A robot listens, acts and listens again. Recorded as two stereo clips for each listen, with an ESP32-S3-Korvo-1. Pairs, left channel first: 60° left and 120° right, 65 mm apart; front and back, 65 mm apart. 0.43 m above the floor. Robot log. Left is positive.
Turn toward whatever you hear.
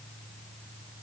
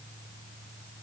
cmd idle
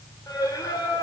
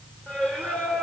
note: The singing: 70° left.
cmd yaw +70
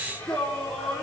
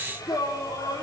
note: The singing is now 15° right.
cmd yaw -15
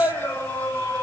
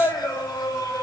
end: Found it: singing, straight ahead, 2 to 4 m away.